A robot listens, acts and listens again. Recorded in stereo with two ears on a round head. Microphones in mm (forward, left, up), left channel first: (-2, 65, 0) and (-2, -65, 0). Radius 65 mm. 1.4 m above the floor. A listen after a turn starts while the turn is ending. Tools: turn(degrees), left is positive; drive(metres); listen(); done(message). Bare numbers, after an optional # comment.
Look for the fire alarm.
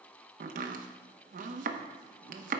listen()
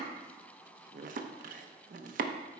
listen()
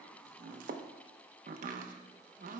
done("I can't make out a fire alarm to turn to.")